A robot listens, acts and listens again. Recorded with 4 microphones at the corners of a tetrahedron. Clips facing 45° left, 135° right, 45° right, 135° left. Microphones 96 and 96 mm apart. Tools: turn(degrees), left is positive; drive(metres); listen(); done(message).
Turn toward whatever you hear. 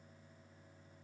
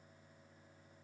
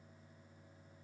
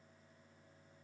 listen()
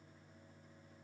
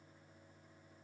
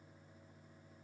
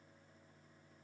listen()
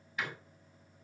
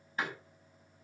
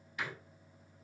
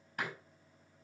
turn(degrees=170)
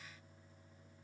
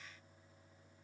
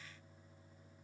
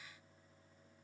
done("I heard a door slam from this way, but can't make it out now.")